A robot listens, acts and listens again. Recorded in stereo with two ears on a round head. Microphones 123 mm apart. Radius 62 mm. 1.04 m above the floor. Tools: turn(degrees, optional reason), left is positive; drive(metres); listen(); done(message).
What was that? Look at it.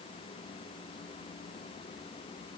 listen()
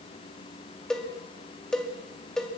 turn(degrees=30)
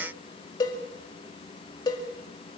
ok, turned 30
turn(degrees=145, reason="So it is at 145° left.")
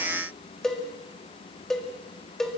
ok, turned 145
done("Found it: a cowbell, straight ahead, 2 to 4 m away.")